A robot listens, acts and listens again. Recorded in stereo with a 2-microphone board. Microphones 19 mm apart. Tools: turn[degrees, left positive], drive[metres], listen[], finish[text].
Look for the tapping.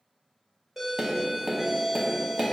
Thought: The tapping: about 35° right or 145° right.
Action: turn[-35]
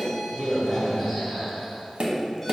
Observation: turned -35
Thought: So it is at 110° right.
Action: turn[-110]
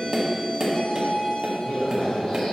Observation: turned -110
Thought: The tapping is now 45° right.
Action: turn[-45]
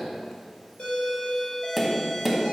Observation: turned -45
Action: finish[Facing the tapping, 1 to 2 m away.]